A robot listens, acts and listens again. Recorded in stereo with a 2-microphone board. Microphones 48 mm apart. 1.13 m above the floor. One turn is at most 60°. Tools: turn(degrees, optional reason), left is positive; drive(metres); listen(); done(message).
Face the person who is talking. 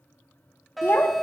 turn(degrees=50, reason="The child speaking: about 50° left or 130° left.")
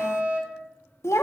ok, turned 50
turn(degrees=60, reason="So it is at 80° left.")
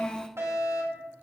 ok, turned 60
turn(degrees=20, reason="The child speaking is now 20° left.")
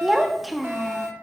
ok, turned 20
done("Found it: a child speaking, straight ahead, 1 to 2 m away.")